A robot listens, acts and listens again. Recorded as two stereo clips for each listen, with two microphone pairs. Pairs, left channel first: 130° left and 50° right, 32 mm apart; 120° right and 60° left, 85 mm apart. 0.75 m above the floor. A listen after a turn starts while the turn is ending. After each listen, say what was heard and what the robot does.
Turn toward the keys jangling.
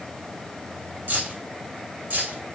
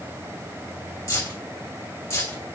The keys jangling: 65° right. Turn 65° right.
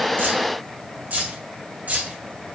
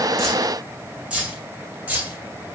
The keys jangling is now 10° right. Turn 10° right.
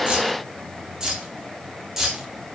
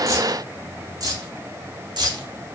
The keys jangling is now 30° left. Turn 30° left.
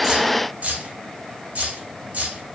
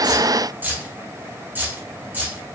Facing the keys jangling, 1 to 2 m away.